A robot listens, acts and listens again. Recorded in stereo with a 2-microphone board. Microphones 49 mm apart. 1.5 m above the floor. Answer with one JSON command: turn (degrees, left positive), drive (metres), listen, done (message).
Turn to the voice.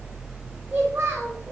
{"turn": -65}
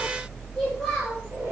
{"listen": true}
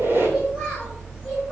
{"listen": true}
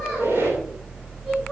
{"done": "I heard a child speaking, but can't make it out now. It was about straight ahead or 50° right."}